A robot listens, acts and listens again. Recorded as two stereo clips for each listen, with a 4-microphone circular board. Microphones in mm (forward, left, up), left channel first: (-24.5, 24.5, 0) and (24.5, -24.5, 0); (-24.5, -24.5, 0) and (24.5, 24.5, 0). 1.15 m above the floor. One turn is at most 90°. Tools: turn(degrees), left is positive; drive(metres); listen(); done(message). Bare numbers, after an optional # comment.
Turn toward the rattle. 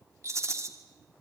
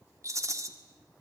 done("Facing the rattle.")